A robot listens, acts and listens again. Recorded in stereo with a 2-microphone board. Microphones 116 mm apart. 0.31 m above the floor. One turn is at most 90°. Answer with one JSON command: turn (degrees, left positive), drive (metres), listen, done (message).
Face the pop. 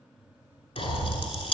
{"turn": 55}
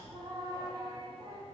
{"listen": true}
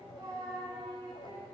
{"done": "I heard a pop, but can't make it out now. It was about straight ahead or 70° left."}